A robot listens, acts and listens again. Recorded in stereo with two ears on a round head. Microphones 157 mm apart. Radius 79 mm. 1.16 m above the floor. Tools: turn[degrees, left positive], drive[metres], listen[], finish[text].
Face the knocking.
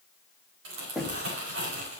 Action: turn[30]
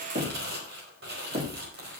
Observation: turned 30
Thought: So it is at 35° right.
Action: turn[-35]
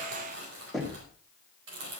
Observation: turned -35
Action: finish[Facing the knocking.]